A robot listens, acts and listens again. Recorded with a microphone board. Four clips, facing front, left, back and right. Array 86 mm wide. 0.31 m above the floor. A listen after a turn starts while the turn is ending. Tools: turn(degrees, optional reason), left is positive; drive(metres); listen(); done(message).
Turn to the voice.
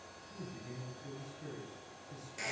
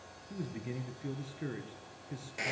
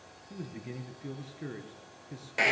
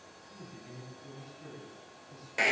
turn(degrees=130, reason="The man speaking: 130° left.")
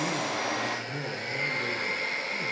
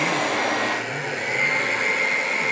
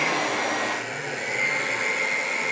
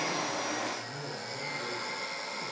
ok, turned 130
listen()
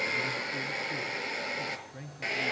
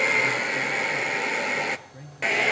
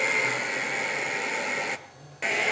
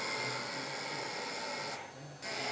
turn(degrees=25, reason="The man speaking is now 25° left.")
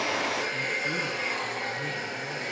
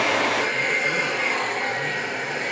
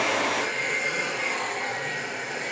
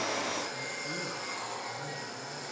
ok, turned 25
listen()
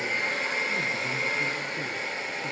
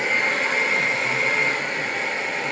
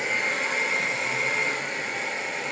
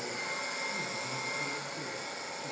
listen()
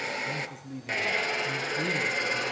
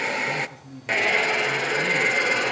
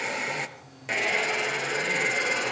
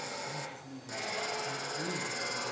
turn(degrees=15, reason="The man speaking is now 15° left.")
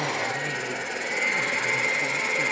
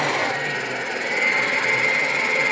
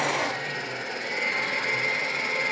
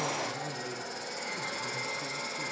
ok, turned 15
listen()
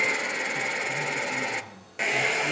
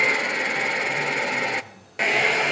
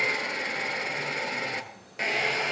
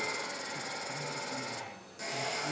listen()
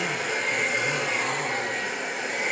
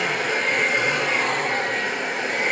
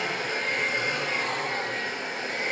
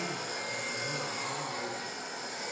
done("Facing where the man speaking came from. I can't hear it now.")